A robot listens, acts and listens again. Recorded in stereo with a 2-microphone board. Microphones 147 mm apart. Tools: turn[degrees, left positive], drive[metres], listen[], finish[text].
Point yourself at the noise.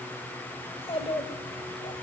Thought: The child speaking: about 40° left or 140° left.
Action: turn[40]
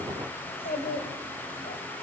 Thought: So it is at 95° left.
Action: turn[95]
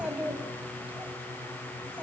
Thought: The child speaking is now 10° right.
Action: turn[-10]
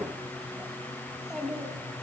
Action: finish[Facing the child speaking.]